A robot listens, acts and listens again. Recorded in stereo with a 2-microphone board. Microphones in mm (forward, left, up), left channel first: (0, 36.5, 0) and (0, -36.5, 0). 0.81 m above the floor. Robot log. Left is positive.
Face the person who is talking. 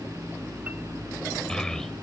cmd yaw +30
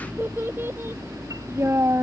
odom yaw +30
note: So it is at 40° right.
cmd yaw -40
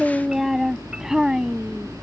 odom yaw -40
note: The child speaking is now 10° right.
cmd yaw -10
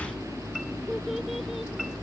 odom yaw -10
cmd idle
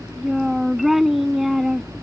end: Found it: a child speaking, straight ahead.